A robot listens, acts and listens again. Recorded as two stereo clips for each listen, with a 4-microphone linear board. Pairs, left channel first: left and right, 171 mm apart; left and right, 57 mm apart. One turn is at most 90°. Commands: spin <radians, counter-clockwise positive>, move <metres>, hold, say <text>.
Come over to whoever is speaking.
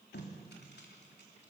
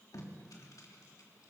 hold
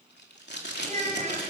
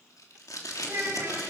spin -0.79
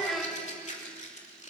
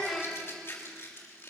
move 1.0
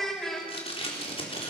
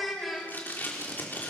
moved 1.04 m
move 1.0
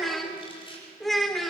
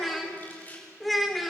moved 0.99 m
move 1.0
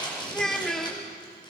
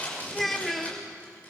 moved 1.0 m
move 1.0
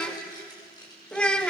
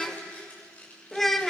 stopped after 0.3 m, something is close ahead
say Arrived at the child speaking, straight ahead.